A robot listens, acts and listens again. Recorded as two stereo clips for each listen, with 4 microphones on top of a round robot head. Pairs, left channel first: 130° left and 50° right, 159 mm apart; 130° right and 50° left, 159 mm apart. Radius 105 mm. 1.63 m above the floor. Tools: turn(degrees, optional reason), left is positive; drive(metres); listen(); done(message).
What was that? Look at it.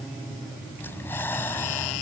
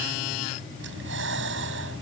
turn(degrees=55, reason="The breathing: 55° left.")
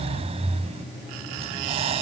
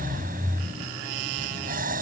turn(degrees=10, reason="The breathing is now 10° left.")
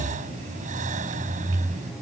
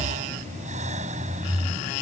done("Facing the breathing.")